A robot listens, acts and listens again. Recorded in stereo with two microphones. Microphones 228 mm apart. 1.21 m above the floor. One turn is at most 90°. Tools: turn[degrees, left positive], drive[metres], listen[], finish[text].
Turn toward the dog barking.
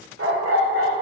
Thought: The dog barking: about 75° right or 105° right.
Action: turn[-75]
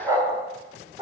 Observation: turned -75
Thought: So it is at 20° right.
Action: turn[-20]
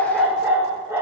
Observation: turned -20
Thought: The dog barking is now 10° right.
Action: turn[-10]
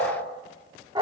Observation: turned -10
Thought: The dog barking is now 20° right.
Action: turn[-20]
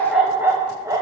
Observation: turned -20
Thought: The dog barking is now 15° right.
Action: turn[-15]
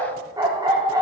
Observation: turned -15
Thought: The dog barking is now 15° right.
Action: turn[-15]
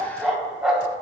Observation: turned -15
Action: finish[Found it: a dog barking, straight ahead.]